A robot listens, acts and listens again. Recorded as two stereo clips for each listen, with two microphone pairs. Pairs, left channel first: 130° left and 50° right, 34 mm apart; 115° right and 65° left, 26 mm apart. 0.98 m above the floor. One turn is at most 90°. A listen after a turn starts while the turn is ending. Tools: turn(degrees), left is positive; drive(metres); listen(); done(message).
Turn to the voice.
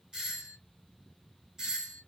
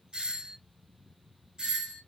listen()
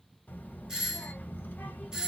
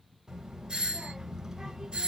turn(degrees=90)
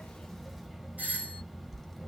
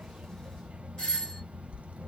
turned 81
turn(degrees=40)
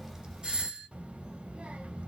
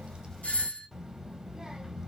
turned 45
done("Facing the child speaking, under 1 m away.")